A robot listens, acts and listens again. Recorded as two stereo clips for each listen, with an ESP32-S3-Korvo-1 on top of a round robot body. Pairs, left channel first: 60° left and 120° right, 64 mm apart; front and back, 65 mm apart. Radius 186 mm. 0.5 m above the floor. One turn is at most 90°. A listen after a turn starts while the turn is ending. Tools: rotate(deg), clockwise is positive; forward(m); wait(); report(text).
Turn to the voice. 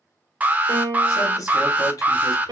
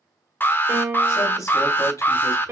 rotate(-30)
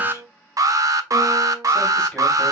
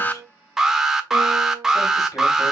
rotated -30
wait()
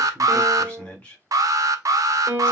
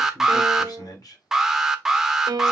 rotate(10)
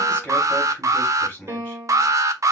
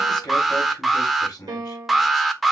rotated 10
report("Facing the man speaking.")